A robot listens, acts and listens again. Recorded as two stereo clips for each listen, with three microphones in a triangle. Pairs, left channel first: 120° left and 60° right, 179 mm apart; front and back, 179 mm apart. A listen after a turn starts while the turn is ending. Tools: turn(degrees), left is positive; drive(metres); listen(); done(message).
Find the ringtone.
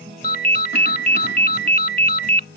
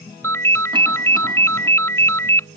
turn(degrees=75)
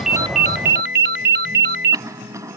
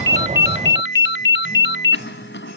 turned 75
turn(degrees=-25)
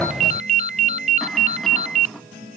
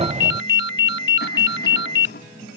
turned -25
turn(degrees=-10)
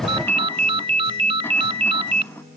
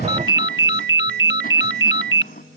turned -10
done("Facing the ringtone.")